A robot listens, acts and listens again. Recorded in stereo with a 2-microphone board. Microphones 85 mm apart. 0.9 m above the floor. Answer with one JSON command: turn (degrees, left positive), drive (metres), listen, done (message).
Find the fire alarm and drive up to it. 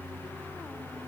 {"listen": true}
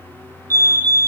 {"turn": -40}
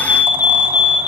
{"turn": -10}
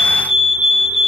{"drive": 1.0}
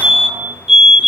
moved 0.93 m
{"turn": -10}
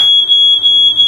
{"drive": 1.0}
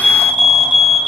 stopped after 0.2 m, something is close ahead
{"done": "I am next to the fire alarm."}